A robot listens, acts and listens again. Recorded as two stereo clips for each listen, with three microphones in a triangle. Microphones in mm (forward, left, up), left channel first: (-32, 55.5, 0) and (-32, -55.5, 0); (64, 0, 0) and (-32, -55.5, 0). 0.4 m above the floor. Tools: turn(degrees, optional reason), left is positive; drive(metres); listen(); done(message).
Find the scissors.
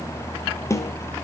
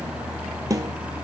listen()
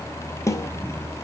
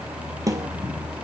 listen()
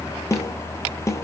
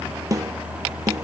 done("I can't make out scissors.")